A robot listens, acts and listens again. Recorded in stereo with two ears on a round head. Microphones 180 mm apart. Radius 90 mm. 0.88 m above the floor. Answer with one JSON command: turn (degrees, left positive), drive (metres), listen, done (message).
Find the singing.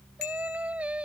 {"turn": -30}
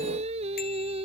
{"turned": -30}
{"turn": -150}
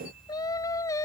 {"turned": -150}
{"turn": 15}
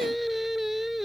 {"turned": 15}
{"done": "Found it: singing, straight ahead."}